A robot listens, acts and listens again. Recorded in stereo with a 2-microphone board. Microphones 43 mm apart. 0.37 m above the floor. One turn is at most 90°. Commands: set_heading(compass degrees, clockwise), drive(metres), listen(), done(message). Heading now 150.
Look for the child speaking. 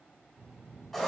set_heading(225)
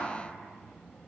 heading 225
set_heading(215)
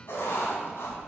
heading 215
set_heading(205)
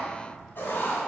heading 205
done("Facing the child speaking.")